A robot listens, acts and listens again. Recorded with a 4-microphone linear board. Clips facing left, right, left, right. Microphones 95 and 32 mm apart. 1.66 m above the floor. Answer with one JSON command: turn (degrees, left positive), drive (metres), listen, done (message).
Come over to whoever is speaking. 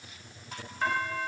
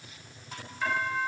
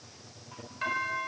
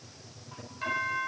{"listen": true}
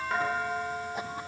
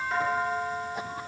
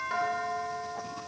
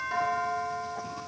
{"listen": true}
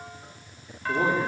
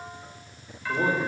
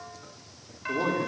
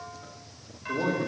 {"turn": 90}
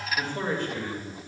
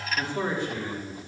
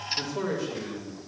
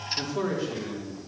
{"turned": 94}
{"turn": -15}
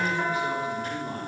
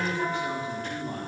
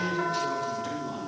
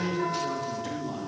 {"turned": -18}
{"drive": 1.0}
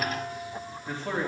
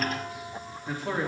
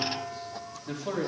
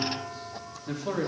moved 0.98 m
{"drive": 1.0}
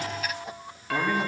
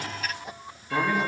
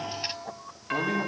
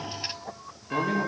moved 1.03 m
{"drive": 1.0}
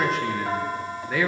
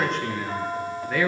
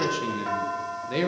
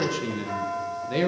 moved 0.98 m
{"drive": 1.0}
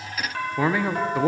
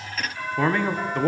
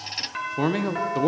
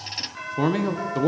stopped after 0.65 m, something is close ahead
{"done": "Arrived at the man speaking, straight ahead."}